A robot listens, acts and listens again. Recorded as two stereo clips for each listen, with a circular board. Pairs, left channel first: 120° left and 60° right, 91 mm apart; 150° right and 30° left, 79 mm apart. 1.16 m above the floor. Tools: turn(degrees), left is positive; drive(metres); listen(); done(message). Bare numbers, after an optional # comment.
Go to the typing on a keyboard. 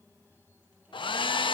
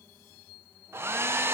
listen()
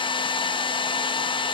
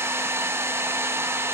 listen()
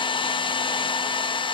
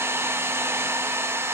done("I can't make out typing on a keyboard to turn to.")